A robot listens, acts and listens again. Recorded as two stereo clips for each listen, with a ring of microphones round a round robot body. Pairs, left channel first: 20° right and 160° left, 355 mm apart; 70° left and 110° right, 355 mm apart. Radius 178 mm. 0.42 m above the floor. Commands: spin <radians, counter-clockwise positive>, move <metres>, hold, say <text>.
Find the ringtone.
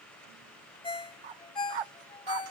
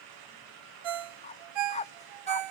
spin -1.75
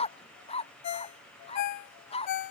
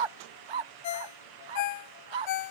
spin 0.44
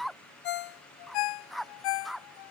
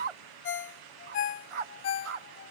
spin 0.17
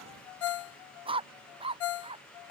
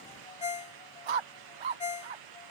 say Found it: a ringtone, straight ahead.